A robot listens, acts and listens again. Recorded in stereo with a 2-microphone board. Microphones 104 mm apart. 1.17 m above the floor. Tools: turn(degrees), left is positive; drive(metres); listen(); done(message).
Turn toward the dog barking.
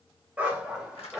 turn(degrees=30)
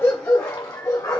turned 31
turn(degrees=140)
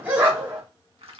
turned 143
turn(degrees=-20)
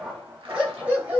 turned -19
turn(degrees=-15)
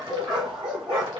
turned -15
turn(degrees=-10)
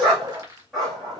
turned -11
done("Facing the dog barking.")